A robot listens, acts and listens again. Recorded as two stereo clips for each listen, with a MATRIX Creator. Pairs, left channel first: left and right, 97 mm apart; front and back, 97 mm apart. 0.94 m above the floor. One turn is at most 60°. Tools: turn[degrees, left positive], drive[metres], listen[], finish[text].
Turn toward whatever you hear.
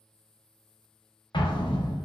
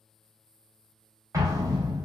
Thought: The explosion: 125° left.
Action: turn[60]
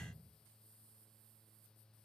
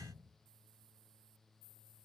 Thought: Nothing new. It was at 65° left.
Action: turn[60]
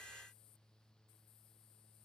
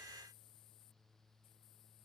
Action: finish[Facing where the explosion came from. I can't hear it now.]